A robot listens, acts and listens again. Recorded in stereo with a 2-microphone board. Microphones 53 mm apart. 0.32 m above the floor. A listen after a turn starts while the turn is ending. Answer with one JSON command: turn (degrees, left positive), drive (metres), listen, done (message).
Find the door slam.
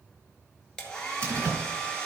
{"turn": -45}
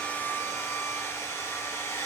{"listen": true}
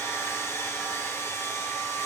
{"done": "I heard a door slam, but can't make it out now. It was about straight ahead or 90° right."}